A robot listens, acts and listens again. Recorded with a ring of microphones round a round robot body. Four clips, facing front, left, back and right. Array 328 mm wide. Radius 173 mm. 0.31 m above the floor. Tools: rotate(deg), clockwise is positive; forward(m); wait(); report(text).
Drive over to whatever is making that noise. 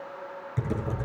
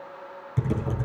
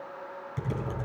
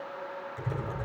rotate(-75)
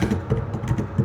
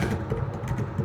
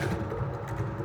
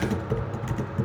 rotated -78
forward(1.0)
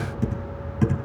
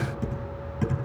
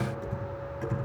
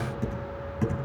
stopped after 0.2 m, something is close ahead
report("Blocked. The typing on a keyboard is further on, straight ahead.")